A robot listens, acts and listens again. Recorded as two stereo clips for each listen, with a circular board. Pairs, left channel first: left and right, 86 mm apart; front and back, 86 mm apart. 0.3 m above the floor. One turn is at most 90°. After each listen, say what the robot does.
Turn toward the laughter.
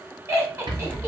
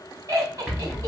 Turn 90° right.
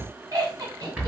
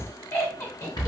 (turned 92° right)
Turn 50° right.
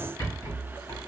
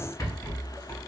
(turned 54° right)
Keep listening.
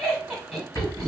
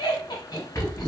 Found it: laughter, straight ahead, 1 to 2 m away.